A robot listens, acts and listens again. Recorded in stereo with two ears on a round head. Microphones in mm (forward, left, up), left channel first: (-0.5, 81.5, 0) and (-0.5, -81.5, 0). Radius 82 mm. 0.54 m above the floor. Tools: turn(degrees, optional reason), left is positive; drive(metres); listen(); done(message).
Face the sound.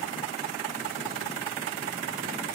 listen()
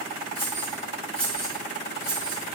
turn(degrees=-30)
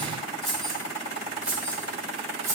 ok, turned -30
turn(degrees=-30)
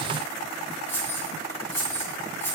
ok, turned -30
turn(degrees=15, reason="So it is at 15° left.")
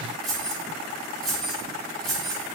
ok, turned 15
done("Facing the keys jangling, 1 to 2 m away.")